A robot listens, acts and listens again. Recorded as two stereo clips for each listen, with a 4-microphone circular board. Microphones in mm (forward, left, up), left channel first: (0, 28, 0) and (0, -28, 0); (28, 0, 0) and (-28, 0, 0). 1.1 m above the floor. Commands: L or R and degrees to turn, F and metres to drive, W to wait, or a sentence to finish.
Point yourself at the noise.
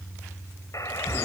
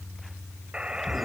L105
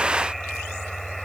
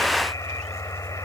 W
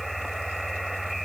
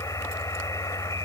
W
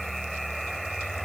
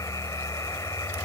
I heard a buzzer from this way, but can't make it out now.